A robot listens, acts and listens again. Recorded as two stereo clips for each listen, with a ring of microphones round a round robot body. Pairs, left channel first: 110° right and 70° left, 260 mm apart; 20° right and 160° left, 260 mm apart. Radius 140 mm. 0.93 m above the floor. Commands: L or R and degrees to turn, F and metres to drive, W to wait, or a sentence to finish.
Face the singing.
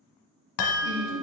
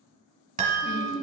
L45
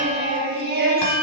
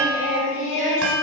L15
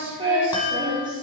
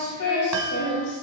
Facing the singing.